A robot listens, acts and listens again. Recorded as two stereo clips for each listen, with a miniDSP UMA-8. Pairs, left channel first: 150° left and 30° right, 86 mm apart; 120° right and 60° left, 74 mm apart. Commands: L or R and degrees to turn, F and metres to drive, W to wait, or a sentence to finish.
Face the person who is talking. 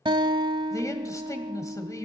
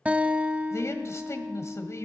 R165
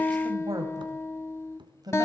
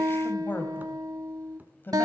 R60
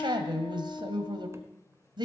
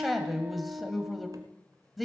R30
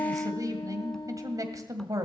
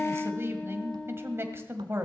L10
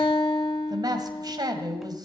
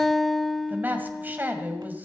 Facing the man speaking.